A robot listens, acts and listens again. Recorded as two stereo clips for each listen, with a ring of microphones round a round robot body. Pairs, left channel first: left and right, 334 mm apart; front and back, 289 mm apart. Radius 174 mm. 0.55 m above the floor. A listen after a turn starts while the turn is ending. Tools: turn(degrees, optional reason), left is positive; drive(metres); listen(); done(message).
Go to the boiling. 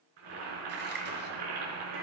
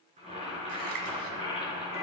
turn(degrees=-110, reason="The boiling: 110° right.")
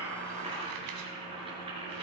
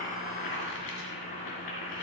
turn(degrees=-15, reason="The boiling is now 15° right.")
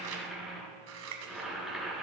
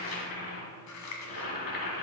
drive(metres=1.0)
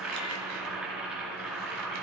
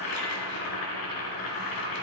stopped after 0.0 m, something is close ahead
done("Something is in my way. I am facing the boiling but have not reached it.")